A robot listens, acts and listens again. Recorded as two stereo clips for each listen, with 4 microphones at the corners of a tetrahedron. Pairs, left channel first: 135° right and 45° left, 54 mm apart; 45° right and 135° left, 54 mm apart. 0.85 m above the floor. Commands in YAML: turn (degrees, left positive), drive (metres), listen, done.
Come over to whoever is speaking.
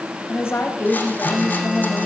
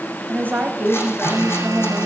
turn: -170
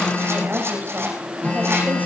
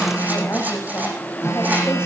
listen: true
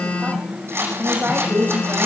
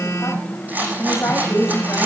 turn: -10
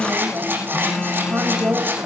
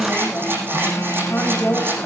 drive: 1.0
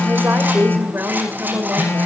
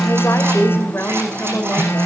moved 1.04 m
drive: 1.0
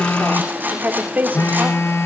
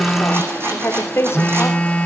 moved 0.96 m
turn: -10
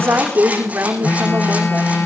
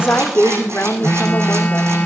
drive: 1.0
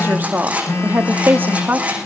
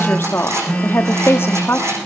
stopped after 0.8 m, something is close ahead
done: "I am next to the woman speaking."